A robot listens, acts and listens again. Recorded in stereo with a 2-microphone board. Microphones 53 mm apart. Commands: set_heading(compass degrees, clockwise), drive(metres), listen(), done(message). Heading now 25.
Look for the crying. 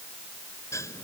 listen()
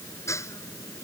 listen()
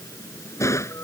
done("I can't make out crying to turn to.")